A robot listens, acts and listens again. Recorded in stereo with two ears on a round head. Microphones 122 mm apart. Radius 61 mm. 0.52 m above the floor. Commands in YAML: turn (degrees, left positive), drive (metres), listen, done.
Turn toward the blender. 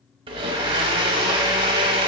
turn: -40
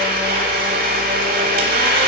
turn: -100
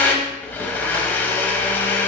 turn: 15
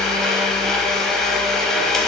done: "Facing the blender."